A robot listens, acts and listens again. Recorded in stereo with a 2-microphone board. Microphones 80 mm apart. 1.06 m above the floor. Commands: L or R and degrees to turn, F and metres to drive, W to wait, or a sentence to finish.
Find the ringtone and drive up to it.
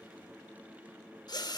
W
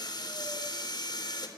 W
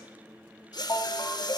L50
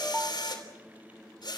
F1.0
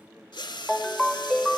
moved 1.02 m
F1.0
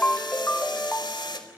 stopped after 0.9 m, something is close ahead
L20
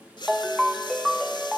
I am next to the ringtone.